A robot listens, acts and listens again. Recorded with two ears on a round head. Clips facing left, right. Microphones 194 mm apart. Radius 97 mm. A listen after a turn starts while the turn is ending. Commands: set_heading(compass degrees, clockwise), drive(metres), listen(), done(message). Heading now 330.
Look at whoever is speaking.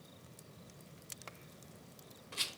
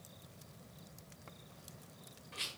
listen()
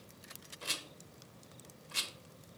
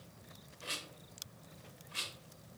listen()
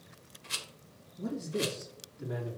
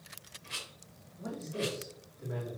set_heading(270)
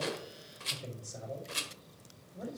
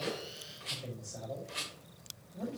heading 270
done("Facing the man speaking.")